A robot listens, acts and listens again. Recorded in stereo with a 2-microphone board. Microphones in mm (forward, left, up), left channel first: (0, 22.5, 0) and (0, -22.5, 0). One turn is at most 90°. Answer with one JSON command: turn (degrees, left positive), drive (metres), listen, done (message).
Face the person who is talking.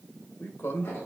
{"turn": 60}
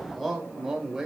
{"turn": -10}
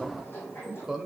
{"turn": -10}
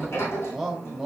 {"turn": -10}
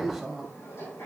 {"done": "Facing the man speaking."}